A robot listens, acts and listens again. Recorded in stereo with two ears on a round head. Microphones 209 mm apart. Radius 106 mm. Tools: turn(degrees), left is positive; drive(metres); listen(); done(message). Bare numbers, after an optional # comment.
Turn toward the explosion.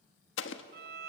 # The explosion: about 55° left or 125° left.
turn(55)
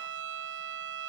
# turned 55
listen()
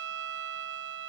done("I heard an explosion, but can't make it out now. It was about straight ahead or 70° left.")